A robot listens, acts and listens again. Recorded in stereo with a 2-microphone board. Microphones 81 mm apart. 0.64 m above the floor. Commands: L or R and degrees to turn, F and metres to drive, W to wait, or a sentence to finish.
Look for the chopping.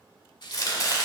L45
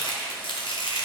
L85
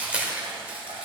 R15
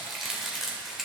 Found it: chopping, straight ahead, 1 to 2 m away.